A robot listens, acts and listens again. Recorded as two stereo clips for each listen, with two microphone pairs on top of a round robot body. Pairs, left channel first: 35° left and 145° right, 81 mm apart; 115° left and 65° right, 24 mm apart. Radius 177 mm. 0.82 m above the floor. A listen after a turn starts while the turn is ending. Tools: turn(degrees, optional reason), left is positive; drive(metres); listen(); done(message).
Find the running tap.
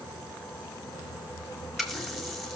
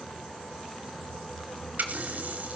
turn(degrees=-55, reason="The running tap: 55° right.")
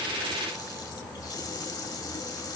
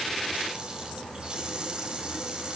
done("Facing the running tap.")